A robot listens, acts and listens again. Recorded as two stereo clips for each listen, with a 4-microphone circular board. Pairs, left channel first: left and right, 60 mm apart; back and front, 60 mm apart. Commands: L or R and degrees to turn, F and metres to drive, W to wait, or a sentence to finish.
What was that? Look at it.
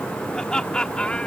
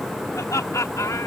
L160
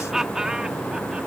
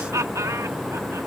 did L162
R10
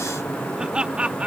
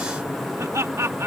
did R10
R25
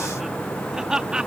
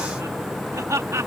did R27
R15
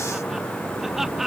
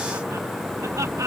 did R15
Facing the laughter.